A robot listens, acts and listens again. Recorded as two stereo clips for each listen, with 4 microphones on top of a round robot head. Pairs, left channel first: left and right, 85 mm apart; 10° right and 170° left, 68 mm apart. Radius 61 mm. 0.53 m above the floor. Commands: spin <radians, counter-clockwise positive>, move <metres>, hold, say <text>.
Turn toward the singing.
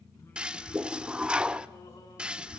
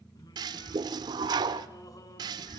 spin 0.52
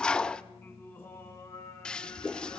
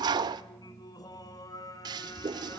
spin 0.44
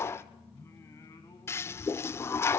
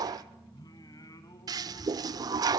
spin 0.52
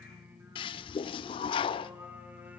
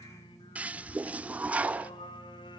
spin -0.26
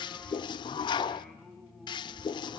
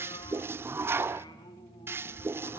say Found it: singing, straight ahead, 2 to 4 m away.